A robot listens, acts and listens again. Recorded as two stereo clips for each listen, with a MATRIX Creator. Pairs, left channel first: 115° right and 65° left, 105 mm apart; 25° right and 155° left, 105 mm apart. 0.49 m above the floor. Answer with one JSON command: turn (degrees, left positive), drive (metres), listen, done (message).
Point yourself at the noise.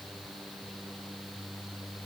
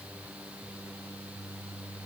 {"listen": true}
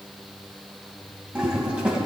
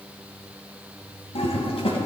{"turn": -15}
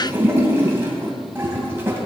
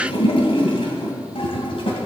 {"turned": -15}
{"done": "Found it: a toilet flushing, straight ahead, 2 to 4 m away."}